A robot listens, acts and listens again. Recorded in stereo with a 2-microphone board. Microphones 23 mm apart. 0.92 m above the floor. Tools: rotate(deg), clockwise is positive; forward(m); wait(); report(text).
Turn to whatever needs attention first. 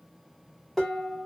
wait()
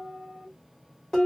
wait()
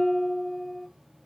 report("I can't make out anything urgent, only dishes clattering.")